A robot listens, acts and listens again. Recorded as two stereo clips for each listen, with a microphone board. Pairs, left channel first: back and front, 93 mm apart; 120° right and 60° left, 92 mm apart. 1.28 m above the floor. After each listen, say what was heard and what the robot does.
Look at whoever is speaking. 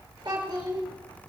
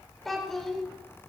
The child speaking: 35° right. Turn 35° right.
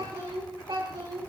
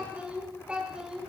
The child speaking is now 20° right. Turn 20° right.
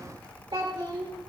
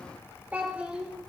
The child speaking is now 15° right. Turn 15° right.
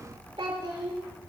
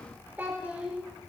The child speaking is now 10° right. Turn 10° right.
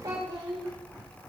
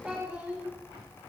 The child speaking is now 10° right. Turn 10° right.
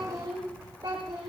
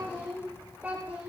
Facing the child speaking.